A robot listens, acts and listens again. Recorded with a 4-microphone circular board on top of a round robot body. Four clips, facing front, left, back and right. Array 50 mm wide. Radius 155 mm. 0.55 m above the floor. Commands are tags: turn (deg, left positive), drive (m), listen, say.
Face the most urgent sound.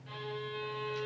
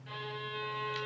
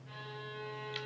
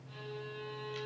<listen/>
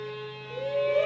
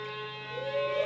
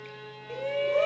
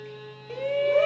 <turn deg="-115"/>
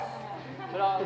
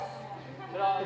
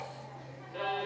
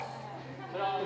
<say>Facing the shout.</say>